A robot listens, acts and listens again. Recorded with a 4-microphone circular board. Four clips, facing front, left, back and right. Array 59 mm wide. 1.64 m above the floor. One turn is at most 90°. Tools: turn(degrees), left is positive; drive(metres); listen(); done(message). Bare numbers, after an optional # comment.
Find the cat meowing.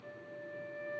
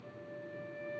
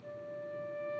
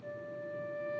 listen()
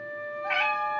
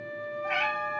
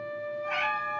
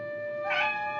# The cat meowing: 20° right.
turn(-20)
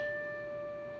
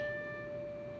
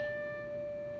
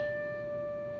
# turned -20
listen()
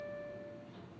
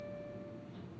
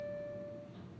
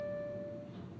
listen()
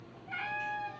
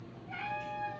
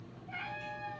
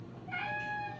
# The cat meowing is now 40° right.
turn(-40)
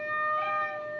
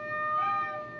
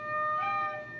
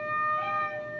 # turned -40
listen()
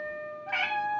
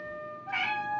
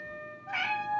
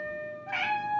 # The cat meowing is now 20° right.
turn(-20)
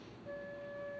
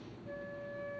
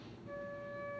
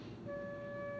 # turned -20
listen()
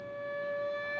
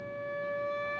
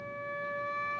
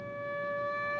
listen()
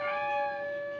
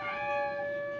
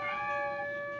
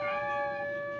done("Found it: a cat meowing, straight ahead, 2 to 4 m away.")